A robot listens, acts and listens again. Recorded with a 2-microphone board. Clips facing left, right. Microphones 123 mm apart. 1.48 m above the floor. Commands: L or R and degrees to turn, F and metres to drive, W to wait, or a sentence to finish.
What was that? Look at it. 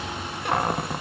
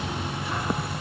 L65
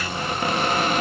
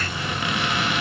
L45
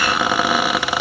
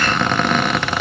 L10
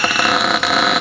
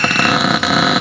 Facing the cupboard door, under 1 m away.